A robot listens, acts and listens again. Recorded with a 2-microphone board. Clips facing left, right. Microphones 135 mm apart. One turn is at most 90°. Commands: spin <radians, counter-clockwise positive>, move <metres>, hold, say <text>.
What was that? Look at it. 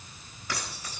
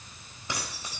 spin -0.44
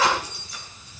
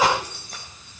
spin -1.57
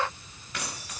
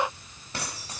spin -0.52
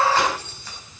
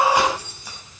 spin -0.26
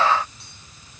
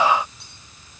hold
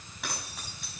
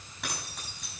say Found it: keys jangling, straight ahead.